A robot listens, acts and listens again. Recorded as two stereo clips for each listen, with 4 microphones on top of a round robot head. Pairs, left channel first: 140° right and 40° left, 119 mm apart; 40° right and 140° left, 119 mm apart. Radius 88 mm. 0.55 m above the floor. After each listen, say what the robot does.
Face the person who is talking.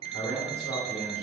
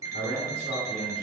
Turn 145° left.
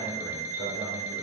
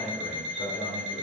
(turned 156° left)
Turn 15° right.
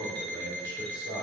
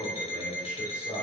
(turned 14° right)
Found it: a man speaking, straight ahead.